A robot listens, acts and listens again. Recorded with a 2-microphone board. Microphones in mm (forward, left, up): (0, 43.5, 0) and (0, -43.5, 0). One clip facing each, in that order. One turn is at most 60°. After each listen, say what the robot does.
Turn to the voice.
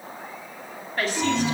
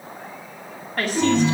Turn 50° right.
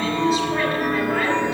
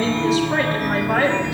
Keep listening.
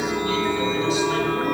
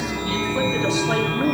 Keep listening.
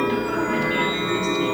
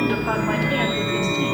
I heard a woman speaking, but can't make it out now. It was about straight ahead or 80° right.